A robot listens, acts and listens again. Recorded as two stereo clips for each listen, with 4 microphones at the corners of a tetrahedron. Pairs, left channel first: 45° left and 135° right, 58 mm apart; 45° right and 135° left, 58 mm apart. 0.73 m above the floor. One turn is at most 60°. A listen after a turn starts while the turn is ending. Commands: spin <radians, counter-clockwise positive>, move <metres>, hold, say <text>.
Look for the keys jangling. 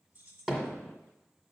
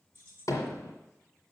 spin -1.05
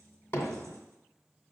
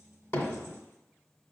spin -1.05
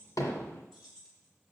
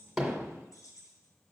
spin -0.61
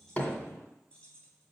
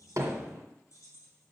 spin -0.35
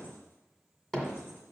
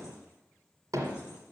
hold
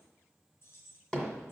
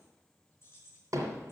say Found it: keys jangling, straight ahead, 2 to 4 m away.